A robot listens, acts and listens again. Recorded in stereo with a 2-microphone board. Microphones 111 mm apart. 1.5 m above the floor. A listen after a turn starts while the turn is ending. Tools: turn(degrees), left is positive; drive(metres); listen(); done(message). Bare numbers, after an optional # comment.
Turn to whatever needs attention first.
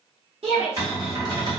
# The shout: about 65° right or 115° right.
turn(-65)
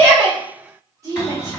# So it is at 35° right.
turn(-35)
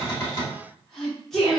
done("Found it: a shout, straight ahead, under 1 m away.")